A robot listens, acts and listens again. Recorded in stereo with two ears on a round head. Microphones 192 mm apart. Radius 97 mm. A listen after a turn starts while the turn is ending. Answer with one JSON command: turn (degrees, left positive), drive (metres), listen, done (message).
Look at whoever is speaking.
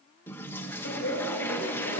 {"turn": 55}
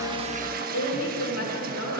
{"turn": 70}
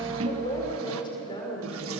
{"turn": 25}
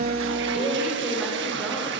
{"listen": true}
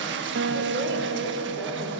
{"listen": true}
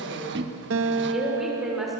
{"done": "Facing the woman speaking, over 4 m away."}